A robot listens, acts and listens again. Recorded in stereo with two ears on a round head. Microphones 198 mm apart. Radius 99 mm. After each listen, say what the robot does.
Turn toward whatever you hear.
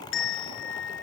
Turn 55° left.
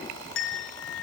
Turn 65° left.
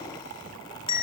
Turn 25° left.
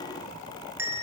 Turn 10° right.
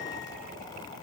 Keep listening.
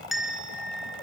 Found it: a bell, straight ahead.